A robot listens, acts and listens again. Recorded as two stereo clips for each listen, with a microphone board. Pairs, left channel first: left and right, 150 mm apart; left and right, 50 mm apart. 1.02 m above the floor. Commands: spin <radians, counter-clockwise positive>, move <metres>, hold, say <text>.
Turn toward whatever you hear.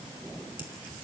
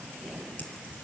spin 0.61
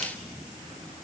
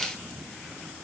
hold
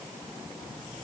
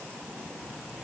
say I heard a crack, but can't make it out now. It was about straight ahead or 110° left.